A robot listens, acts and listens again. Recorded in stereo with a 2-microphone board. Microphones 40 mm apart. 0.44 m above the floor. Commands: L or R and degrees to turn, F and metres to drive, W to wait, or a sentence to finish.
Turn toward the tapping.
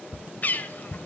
L30
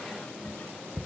R30
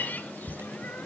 Facing the tapping.